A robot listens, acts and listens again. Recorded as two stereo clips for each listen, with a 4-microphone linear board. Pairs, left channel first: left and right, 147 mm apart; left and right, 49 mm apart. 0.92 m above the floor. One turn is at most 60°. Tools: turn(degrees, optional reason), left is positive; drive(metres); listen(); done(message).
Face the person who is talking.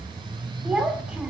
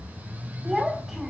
turn(degrees=-30)
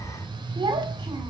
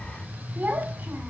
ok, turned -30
turn(degrees=-60, reason="So it is at 145° right.")
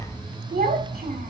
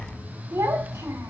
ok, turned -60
turn(degrees=-60, reason="The child speaking is now 100° right.")
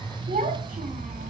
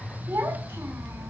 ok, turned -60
turn(degrees=-60, reason="The child speaking is now 70° right.")
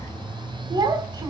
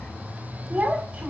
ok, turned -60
turn(degrees=-30, reason="The child speaking is now 30° right.")
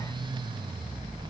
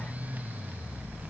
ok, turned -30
listen()
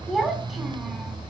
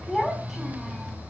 done("Facing the child speaking.")